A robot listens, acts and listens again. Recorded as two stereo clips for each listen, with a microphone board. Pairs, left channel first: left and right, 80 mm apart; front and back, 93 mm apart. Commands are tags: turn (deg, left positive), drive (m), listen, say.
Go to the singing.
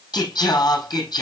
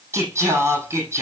<turn deg="120"/>
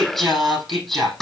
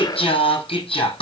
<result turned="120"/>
<drive m="1.0"/>
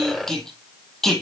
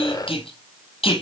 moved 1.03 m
<drive m="1.0"/>
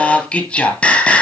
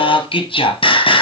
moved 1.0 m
<turn deg="15"/>
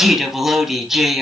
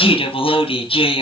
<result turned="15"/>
<drive m="1.0"/>
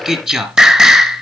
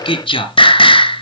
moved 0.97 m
<turn deg="-10"/>
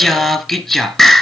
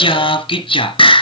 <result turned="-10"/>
<drive m="1.0"/>
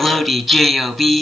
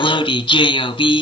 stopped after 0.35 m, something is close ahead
<say>I am next to the singing.</say>